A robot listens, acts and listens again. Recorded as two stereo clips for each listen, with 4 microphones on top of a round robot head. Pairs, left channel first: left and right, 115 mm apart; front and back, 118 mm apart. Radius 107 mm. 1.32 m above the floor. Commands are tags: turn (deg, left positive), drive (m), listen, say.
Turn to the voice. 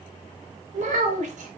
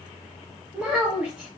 <turn deg="-100"/>
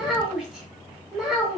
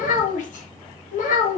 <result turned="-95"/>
<say>Facing the child speaking.</say>